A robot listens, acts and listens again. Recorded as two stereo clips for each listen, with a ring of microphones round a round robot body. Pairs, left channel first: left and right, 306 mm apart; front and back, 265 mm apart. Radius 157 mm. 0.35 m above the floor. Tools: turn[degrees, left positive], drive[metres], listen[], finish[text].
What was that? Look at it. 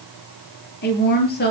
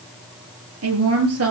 Thought: The woman speaking: 150° left.
Action: turn[150]
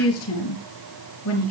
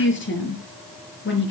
Thought: The woman speaking is now 45° left.
Action: turn[45]
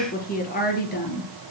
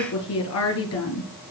Thought: The woman speaking is now 30° left.
Action: turn[30]
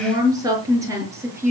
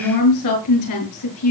Thought: The woman speaking is now 10° right.
Action: turn[-10]
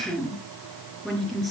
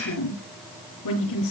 Action: finish[Facing the woman speaking.]